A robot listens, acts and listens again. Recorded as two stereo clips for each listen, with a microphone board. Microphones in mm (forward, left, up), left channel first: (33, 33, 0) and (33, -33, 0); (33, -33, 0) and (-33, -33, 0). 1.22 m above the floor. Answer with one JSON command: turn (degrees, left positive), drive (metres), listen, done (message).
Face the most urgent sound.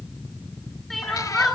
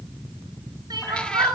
{"turn": 180}
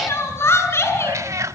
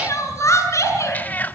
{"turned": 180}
{"turn": 45}
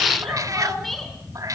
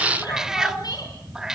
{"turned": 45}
{"listen": true}
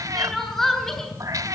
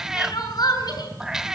{"done": "Found it: crying, straight ahead."}